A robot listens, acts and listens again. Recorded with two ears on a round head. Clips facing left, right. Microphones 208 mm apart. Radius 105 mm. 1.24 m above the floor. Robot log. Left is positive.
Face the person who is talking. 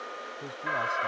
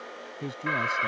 note: The man speaking: about 35° right or 145° right.
cmd yaw -35
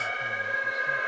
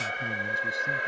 cmd idle
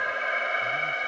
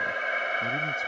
cmd idle
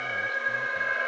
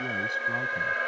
end: I heard a man speaking, but can't make it out now. It was about straight ahead or 110° right.